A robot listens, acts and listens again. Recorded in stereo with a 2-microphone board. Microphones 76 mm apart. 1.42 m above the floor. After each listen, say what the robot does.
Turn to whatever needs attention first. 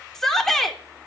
Turn 30° left.
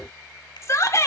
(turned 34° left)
Turn 140° left.
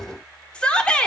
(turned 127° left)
Turn 15° left.
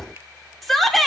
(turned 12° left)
Found it: a shout, straight ahead, 2 to 4 m away.